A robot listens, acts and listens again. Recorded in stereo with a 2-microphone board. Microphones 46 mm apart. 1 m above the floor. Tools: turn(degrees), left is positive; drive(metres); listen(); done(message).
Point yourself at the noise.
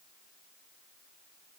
listen()
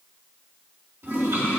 turn(degrees=-70)
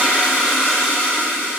turn(degrees=-30)
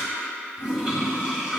turn(degrees=-15)
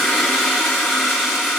done("Facing the toilet flushing, 2 to 4 m away.")